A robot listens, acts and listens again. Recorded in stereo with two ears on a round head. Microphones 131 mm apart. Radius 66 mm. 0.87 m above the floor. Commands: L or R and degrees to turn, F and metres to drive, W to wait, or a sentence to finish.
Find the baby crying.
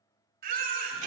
R65
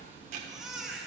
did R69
Found it: a baby crying, straight ahead.